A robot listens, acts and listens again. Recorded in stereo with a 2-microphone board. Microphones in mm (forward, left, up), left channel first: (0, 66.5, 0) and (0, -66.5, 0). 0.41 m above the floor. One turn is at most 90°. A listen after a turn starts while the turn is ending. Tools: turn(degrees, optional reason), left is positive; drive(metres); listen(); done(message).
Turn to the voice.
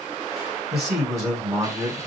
turn(degrees=30)
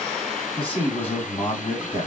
turn(degrees=90, reason="So it is at 135° left.")
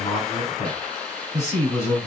turn(degrees=20, reason="The man speaking is now 20° left.")
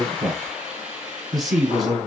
done("Facing the man speaking, 2 to 4 m away.")